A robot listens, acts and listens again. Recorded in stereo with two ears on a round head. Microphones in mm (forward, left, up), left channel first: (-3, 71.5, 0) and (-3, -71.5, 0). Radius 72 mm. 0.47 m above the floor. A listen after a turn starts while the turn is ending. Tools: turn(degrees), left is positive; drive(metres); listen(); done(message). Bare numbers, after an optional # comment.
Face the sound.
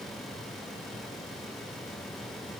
listen()
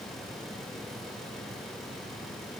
listen()
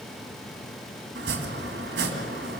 turn(-90)
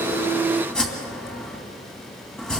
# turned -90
done("Facing the chopping.")